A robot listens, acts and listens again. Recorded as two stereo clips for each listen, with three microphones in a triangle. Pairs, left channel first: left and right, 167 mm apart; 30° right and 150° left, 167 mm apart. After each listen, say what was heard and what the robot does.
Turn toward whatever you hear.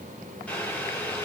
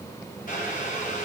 Facing the boiling.